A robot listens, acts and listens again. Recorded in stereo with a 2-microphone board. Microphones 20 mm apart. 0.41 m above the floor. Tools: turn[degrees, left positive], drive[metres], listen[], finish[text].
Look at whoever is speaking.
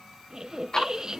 Action: listen[]
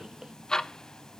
Action: listen[]
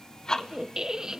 Action: finish[I can't make out anyone speaking, only a squeak and ticking.]